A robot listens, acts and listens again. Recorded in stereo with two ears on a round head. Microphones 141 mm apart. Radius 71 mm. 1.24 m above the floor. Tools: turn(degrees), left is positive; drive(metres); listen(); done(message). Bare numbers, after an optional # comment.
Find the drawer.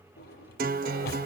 # The drawer: about 70° left or 110° left.
turn(70)
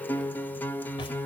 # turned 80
listen()
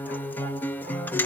listen()
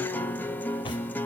done("I heard a drawer, but can't make it out now. It was about 10° right or 30° left.")